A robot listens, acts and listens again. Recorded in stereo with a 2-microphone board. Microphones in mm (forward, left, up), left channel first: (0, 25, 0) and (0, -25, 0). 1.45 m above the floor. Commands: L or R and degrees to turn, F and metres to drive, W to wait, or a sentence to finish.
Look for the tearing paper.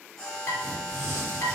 R65
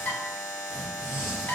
Facing the tearing paper.